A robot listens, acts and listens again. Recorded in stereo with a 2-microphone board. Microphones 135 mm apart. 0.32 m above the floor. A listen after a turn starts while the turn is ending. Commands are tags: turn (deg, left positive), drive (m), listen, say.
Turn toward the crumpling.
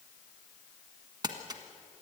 <turn deg="-30"/>
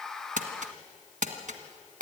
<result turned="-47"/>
<turn deg="-100"/>
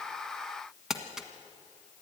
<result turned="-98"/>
<say>Found it: crumpling, straight ahead.</say>